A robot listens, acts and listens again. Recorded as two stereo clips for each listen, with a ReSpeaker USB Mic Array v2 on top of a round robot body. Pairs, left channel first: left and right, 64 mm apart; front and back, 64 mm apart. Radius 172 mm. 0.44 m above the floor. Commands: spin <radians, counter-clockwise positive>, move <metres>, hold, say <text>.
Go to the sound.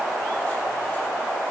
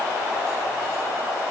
hold
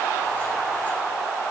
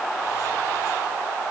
hold
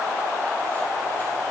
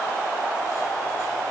say I can't make out anything.